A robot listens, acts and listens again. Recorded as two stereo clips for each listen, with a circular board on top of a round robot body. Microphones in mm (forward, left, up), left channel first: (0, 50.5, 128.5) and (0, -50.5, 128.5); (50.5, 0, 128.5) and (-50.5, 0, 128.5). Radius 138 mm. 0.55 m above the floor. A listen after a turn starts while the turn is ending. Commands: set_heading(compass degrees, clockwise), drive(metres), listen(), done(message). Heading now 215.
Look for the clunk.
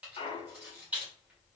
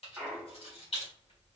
set_heading(105)
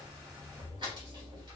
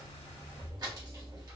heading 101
done("Facing where the clunk came from. I can't hear it now.")